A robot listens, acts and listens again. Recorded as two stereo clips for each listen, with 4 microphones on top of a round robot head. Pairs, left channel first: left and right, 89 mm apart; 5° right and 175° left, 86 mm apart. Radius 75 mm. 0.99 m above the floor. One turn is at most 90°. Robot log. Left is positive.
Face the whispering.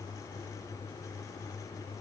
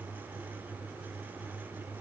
cmd idle
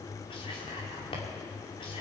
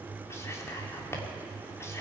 note: The whispering: 55° left.
cmd yaw +55
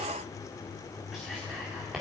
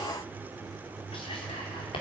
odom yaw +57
end: Found it: whispering, straight ahead.